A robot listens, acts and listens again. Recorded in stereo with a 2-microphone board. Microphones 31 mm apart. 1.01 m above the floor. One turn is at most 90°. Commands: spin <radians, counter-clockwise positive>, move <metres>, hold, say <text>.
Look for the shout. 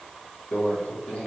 hold
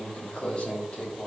hold
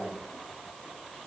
say I can't make out a shout, only a microwave.